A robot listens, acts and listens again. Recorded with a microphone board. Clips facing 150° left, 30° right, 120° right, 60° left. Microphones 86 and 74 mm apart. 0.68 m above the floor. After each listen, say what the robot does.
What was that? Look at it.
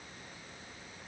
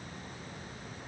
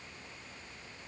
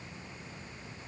Keep listening.
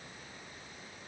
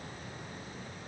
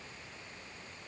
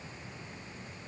Keep listening.
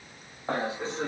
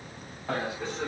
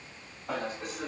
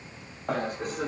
Turn 90° left.
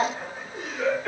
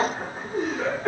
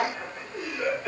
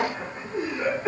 Turn 10° left.
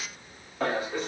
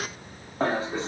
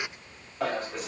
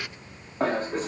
Turn 15° left.
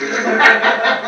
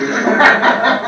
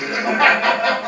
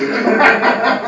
Turn 20° left.
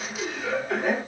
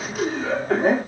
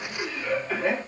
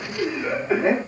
Found it: laughter, straight ahead, 1 to 2 m away.